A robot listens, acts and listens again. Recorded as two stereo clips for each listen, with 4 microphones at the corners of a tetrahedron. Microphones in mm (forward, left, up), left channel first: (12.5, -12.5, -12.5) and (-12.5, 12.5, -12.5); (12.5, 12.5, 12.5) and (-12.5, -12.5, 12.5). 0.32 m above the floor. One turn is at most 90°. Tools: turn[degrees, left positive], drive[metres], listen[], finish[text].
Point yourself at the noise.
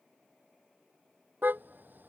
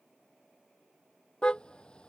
Thought: The car horn: 105° left.
Action: turn[90]
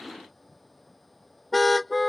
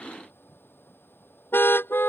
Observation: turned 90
Thought: The car horn is now 45° left.
Action: turn[45]
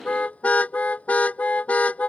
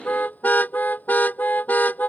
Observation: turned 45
Action: finish[Facing the car horn.]